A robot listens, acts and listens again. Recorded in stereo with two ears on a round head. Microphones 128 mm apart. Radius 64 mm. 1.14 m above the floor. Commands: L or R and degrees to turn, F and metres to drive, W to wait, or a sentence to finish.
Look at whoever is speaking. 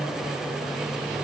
W
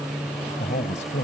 L55
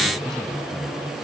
W
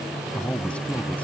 L10
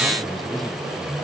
W
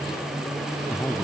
Facing the man speaking.